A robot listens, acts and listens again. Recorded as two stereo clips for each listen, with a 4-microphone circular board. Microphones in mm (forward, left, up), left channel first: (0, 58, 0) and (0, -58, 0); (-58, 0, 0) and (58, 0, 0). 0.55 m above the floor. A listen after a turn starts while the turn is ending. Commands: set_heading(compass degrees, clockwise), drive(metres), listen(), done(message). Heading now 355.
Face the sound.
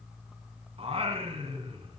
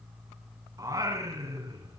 set_heading(50)
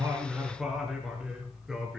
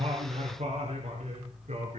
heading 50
done("Found it: singing, straight ahead.")